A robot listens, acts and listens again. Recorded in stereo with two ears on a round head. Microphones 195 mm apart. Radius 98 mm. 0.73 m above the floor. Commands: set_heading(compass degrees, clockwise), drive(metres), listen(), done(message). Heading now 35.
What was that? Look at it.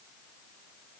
listen()
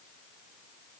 listen()
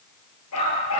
set_heading(305)
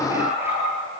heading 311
set_heading(321)
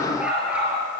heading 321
done("Facing the dog barking, over 4 m away.")